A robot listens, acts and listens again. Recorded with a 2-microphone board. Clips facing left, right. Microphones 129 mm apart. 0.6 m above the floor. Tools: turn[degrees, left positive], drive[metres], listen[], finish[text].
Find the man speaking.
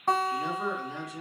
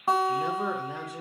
Thought: The man speaking: about 55° right or 125° right.
Action: turn[-55]
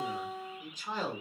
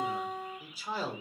Thought: So it is at 10° right.
Action: turn[-10]
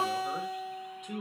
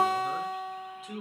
Action: finish[Found it: a man speaking, straight ahead.]